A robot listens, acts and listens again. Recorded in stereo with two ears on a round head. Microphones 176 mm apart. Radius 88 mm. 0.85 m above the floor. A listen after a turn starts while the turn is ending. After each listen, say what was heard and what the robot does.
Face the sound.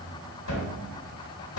Turn 90° left.
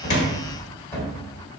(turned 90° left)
So it is at 10° left. Turn 10° left.
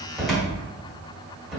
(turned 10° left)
Facing the cupboard door.